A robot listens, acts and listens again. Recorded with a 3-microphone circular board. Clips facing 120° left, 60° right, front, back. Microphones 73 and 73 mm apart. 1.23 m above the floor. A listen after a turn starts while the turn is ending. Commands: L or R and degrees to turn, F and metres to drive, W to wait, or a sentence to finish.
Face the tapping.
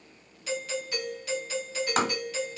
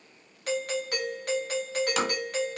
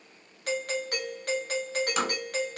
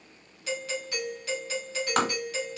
L160
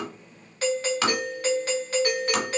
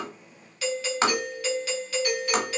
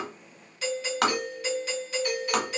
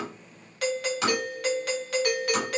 Facing the tapping, 1 to 2 m away.